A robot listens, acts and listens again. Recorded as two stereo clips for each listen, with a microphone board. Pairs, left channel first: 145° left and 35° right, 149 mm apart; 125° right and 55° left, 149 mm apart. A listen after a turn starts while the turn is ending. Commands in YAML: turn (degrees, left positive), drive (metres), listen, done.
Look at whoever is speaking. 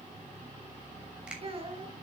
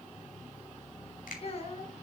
turn: -80
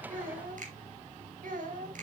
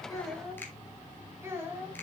turn: -20
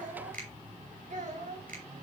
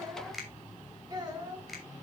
done: "Found it: a child speaking, straight ahead, 2 to 4 m away."